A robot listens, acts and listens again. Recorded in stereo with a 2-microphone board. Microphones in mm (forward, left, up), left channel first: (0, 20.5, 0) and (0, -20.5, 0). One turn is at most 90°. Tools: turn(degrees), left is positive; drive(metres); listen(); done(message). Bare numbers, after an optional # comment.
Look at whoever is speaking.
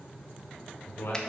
# The man speaking: about 70° left or 110° left.
turn(70)
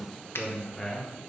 done("Facing the man speaking.")